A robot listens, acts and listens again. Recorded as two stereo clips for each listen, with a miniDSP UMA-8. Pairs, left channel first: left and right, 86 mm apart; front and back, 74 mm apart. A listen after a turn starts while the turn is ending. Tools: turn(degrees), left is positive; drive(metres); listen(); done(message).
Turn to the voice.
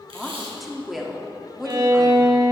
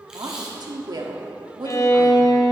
turn(degrees=180)
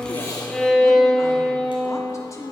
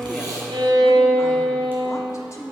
turn(degrees=40)
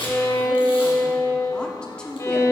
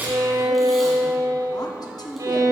turn(degrees=10)
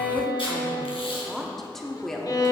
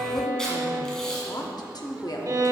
done("Facing the woman speaking.")